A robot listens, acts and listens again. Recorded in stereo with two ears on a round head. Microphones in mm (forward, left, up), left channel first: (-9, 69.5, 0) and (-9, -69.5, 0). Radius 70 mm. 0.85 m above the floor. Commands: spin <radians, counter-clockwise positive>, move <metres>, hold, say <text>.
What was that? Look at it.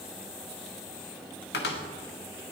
spin 1.57
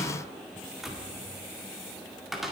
say Found it: a cupboard door, straight ahead, 1 to 2 m away.